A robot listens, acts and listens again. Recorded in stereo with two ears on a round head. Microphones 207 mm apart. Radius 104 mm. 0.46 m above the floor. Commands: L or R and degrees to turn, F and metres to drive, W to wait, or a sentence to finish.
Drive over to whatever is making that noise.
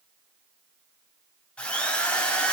L30
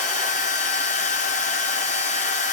L145
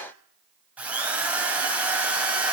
F1.0
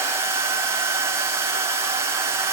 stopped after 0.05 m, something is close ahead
R10
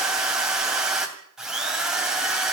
Blocked. The drill is further on, straight ahead.